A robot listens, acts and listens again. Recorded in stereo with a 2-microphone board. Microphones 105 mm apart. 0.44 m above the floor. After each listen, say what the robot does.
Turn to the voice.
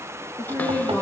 Turn 20° left.
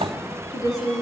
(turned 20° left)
Turn 35° left.
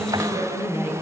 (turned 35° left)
Turn 120° left.
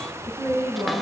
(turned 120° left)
Turn 25° right.
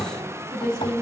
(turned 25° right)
Turn 10° left.
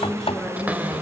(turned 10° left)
Facing the woman speaking.